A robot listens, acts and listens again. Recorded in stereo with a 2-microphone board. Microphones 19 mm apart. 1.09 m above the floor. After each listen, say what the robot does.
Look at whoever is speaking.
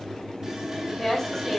Turn 15° left.
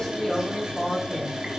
Turn 30° left.
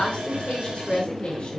Turn 115° left.
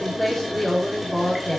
Found it: a woman speaking, straight ahead, 2 to 4 m away.